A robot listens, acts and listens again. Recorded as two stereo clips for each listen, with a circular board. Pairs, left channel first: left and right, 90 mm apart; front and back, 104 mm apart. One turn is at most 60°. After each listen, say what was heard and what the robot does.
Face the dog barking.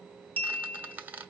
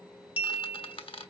Keep listening.
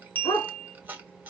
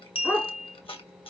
The dog barking: 75° left. Turn 60° left.
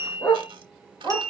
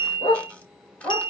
The dog barking is now 25° left. Turn 25° left.
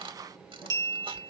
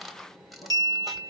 Keep listening.
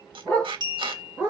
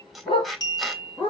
The dog barking is now 15° left. Turn 15° left.
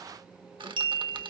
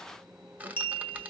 Keep listening.
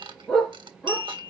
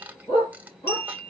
Facing the dog barking.